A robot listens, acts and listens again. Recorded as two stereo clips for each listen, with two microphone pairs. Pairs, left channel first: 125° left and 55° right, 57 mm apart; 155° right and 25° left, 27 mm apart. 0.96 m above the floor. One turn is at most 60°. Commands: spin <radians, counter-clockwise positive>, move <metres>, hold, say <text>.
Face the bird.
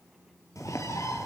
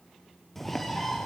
spin 1.05
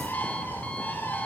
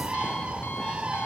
spin 1.05
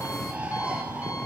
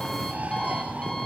spin 0.17
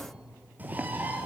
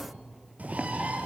say Found it: a bird, straight ahead.